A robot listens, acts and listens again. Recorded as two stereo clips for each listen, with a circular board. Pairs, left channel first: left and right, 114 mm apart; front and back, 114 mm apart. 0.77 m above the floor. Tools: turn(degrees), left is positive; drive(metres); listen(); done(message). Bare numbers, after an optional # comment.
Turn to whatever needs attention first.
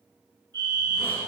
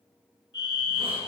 # The fire alarm: 40° right.
turn(-40)
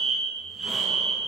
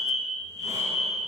done("Found it: a fire alarm, straight ahead, over 4 m away.")